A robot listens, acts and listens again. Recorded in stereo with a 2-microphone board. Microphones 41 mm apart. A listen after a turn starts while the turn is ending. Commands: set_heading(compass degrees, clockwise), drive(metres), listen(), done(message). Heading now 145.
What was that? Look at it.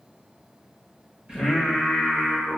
set_heading(180)
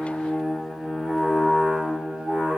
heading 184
set_heading(219)
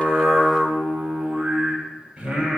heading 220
set_heading(245)
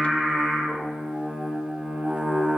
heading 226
set_heading(246)
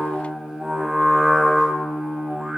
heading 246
done("Facing the singing, 1 to 2 m away.")